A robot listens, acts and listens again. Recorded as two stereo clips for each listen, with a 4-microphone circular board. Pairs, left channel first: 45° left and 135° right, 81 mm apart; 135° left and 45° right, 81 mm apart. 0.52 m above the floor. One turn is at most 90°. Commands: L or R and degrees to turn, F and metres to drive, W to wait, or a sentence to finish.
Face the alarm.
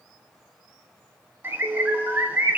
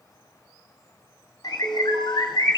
R45
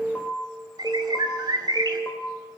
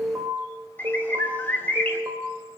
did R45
R10
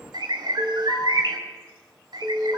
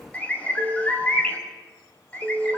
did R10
Found it: an alarm, straight ahead, 1 to 2 m away.